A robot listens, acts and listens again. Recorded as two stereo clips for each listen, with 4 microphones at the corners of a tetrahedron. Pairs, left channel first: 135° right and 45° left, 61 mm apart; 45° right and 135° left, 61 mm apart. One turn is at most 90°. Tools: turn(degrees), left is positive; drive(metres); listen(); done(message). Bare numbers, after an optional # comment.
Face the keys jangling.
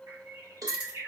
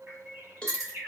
# The keys jangling: 110° left.
turn(90)
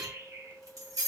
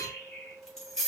# The keys jangling is now 40° left.
turn(40)
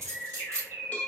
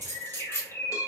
done("Found it: keys jangling, straight ahead.")